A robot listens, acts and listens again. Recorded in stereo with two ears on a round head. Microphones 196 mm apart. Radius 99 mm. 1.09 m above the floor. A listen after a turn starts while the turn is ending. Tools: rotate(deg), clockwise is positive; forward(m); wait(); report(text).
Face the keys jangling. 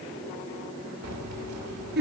rotate(90)
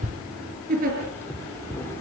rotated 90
rotate(-10)
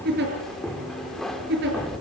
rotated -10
report("Found it: keys jangling, straight ahead.")